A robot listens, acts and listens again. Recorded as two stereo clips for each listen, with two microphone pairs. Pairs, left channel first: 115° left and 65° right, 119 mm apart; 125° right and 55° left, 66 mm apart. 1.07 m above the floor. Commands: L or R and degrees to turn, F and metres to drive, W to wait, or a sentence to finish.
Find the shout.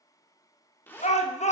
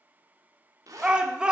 L130
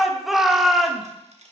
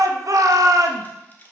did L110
L20
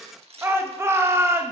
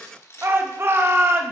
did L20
Found it: a shout, straight ahead.